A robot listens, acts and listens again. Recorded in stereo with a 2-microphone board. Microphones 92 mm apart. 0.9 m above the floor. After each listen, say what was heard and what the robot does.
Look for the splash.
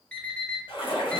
The splash: about 75° left or 105° left. Turn 75° left.
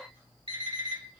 Keep listening.
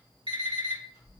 I heard a splash, but can't make it out now. It was about straight ahead or 30° left.